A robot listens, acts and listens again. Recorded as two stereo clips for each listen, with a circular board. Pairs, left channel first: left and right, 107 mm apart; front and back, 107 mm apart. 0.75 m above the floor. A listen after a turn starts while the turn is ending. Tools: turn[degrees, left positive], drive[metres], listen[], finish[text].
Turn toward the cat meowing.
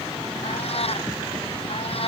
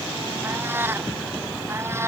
Thought: The cat meowing: 115° left.
Action: turn[115]
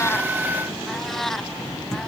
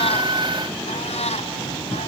Action: finish[Facing the cat meowing.]